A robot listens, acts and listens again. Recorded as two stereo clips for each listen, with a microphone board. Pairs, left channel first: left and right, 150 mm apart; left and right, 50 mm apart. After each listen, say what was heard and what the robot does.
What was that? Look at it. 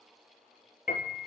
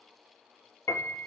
Turn 90° left.
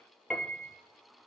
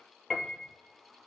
Found it: a piano, straight ahead, 1 to 2 m away.